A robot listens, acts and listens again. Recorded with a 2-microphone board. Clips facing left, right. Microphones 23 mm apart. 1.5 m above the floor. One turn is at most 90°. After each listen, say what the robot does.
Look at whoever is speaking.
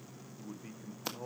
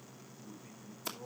Turn 50° left.
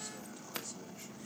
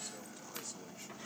Keep listening.
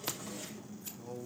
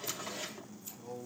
Facing the man speaking.